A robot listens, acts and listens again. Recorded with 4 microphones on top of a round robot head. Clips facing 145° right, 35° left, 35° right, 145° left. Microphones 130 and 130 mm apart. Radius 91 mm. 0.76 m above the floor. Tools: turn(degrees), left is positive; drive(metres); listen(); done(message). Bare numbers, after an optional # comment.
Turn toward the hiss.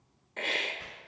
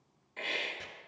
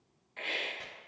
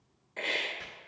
# The hiss: 175° right.
turn(-175)
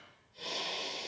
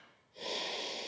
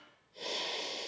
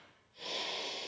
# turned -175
done("Found it: a hiss, straight ahead.")